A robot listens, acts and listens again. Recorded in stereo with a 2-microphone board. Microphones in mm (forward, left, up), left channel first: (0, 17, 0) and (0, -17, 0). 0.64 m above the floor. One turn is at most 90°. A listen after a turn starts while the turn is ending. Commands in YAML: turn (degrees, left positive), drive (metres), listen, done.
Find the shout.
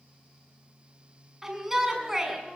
turn: -30
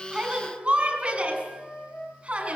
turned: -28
turn: -90
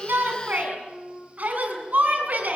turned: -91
turn: -50
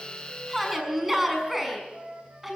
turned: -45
done: "Found it: a shout, straight ahead, over 4 m away."